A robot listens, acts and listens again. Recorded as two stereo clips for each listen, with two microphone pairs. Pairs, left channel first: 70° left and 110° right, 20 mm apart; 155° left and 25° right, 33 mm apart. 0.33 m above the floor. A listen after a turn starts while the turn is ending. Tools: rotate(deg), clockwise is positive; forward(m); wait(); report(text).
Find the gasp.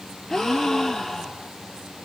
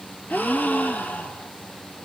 rotate(-130)
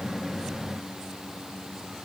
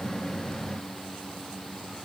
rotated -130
report("Facing where the gasp came from. I can't hear it now.")